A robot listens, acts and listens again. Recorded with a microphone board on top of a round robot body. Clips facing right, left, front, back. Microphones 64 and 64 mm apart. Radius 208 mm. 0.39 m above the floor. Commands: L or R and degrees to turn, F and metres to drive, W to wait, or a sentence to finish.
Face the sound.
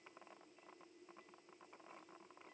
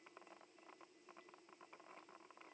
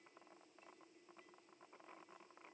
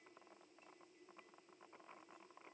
W
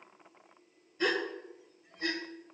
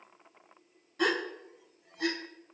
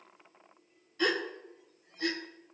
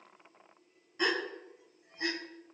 L110
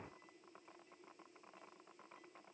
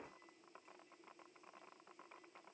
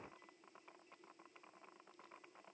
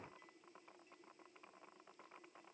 Facing where the gasp came from. I can't hear it now.